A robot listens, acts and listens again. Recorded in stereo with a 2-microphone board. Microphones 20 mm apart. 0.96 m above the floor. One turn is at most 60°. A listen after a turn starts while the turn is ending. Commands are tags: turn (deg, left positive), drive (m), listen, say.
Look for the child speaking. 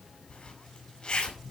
<listen/>
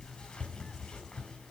<listen/>
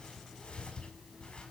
<say>I can't make out a child speaking to turn to.</say>